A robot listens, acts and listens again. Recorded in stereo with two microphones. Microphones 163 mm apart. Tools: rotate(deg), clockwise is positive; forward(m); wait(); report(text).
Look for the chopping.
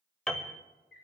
wait()
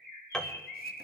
wait()
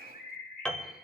report("I can't make out chopping, only a bird and a piano.")